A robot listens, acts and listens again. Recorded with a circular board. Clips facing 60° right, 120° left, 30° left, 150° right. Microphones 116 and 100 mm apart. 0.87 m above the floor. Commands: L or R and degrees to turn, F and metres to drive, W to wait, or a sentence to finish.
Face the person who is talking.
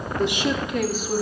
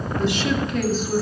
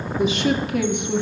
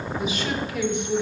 L20
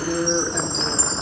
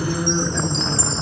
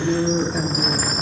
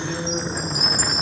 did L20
L20
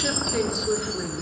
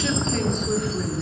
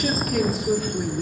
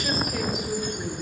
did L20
L30
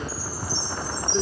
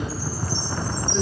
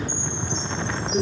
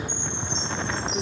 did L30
Facing the woman speaking.